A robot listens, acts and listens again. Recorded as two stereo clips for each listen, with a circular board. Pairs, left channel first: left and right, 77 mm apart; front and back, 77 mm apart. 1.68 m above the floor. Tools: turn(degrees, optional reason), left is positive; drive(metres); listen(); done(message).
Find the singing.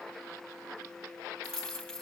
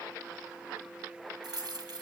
listen()
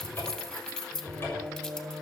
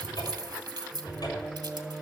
turn(degrees=-75, reason="The singing: 75° right.")
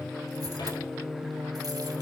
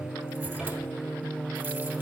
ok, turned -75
turn(degrees=-90, reason="The singing is now 90° right.")
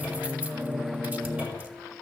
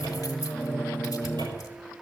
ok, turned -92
turn(degrees=-50, reason="The singing is now 50° right.")
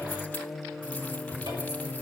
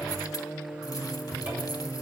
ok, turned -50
done("Facing the singing, 1 to 2 m away.")